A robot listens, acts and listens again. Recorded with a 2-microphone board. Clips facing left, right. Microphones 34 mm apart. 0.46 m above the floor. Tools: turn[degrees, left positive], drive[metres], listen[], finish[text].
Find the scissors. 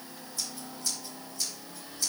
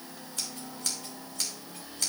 Thought: The scissors: about 65° right or 115° right.
Action: turn[-65]
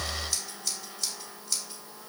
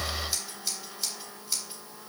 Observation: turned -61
Thought: So it is at 10° right.
Action: turn[-10]
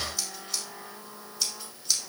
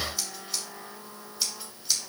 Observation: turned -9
Action: finish[Found it: scissors, straight ahead.]